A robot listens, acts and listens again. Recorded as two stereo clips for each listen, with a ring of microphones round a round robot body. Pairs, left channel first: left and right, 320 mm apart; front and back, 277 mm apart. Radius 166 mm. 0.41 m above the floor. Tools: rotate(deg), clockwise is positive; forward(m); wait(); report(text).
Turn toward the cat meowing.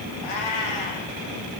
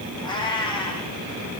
rotate(-75)
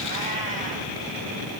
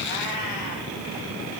wait()
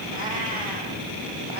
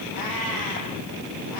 wait()
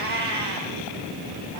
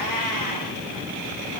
rotate(30)
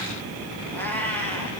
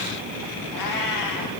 report("Found it: a cat meowing, straight ahead.")